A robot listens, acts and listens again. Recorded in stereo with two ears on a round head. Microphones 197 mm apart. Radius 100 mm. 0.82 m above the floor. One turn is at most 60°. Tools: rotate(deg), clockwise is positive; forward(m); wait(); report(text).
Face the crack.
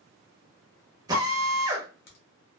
rotate(-45)
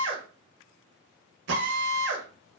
wait()
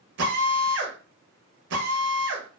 report("I heard a crack, but can't make it out now. It was about straight ahead or 90° left.")